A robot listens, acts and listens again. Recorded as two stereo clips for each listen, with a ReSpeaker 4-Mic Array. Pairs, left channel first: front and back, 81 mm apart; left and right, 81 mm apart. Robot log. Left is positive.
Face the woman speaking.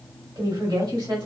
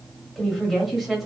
note: The woman speaking: straight behind.
cmd yaw +180
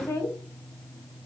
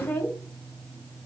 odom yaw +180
note: The woman speaking is now 30° left.
cmd yaw +30
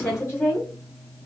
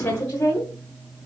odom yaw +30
note: The woman speaking is now 45° left.
cmd yaw +45
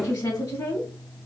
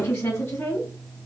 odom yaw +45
note: The woman speaking is now 30° left.
cmd yaw +30
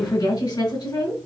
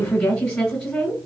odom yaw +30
note: The woman speaking is now 10° left.
cmd yaw +10
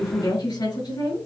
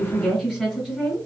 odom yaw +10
end: Facing the woman speaking, 1 to 2 m away.